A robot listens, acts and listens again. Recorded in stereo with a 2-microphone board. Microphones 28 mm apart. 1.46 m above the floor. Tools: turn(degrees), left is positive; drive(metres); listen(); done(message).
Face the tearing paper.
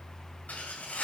turn(degrees=65)
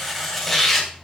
done("Found it: tearing paper, straight ahead.")